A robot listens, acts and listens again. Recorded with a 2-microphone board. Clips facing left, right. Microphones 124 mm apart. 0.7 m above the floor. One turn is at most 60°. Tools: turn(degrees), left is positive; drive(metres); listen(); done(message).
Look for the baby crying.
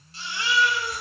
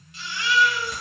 turn(degrees=35)
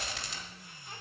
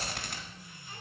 listen()
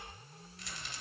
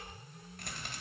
listen()
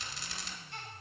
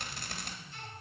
turn(degrees=60)
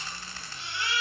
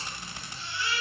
turn(degrees=60)
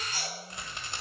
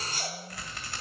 turn(degrees=30)
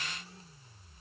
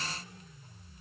listen()
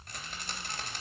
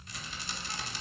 listen()
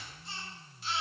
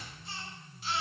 done("Facing the baby crying, over 4 m away.")